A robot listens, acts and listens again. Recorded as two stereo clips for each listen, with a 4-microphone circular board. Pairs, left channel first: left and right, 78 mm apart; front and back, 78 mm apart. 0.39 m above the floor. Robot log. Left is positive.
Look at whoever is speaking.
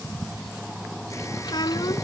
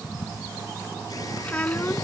note: The child speaking: 70° left.
cmd yaw +70
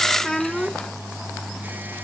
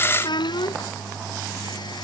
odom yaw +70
end: Found it: a child speaking, straight ahead.